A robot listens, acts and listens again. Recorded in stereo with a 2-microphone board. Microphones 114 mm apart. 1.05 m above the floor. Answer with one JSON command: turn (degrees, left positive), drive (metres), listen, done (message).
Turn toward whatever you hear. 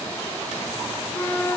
{"turn": 25}
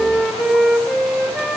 {"done": "Facing the flute, 2 to 4 m away."}